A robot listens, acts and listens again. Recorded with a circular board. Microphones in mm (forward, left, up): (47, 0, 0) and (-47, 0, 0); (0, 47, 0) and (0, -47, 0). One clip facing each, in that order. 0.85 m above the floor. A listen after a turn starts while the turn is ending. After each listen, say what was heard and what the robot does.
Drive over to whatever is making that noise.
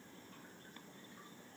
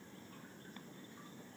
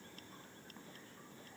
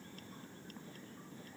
Keep listening.
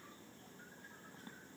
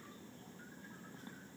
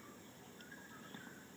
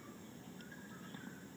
Keep listening.
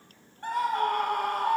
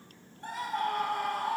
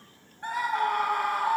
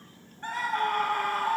The scream: 15° left. Turn 15° left.
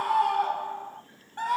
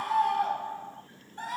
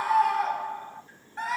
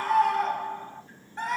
Drive 1.0 m forward.
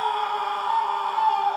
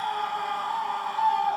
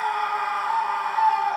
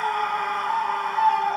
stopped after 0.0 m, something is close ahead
Something is in my way. I am facing the scream but have not reached it.